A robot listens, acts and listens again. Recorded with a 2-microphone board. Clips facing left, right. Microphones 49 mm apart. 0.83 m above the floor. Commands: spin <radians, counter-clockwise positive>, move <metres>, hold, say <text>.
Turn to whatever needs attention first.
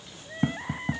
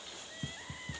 spin 0.70
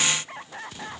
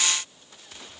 spin 1.75
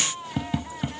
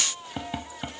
spin 0.35
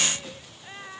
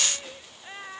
say Found it: crying, straight ahead.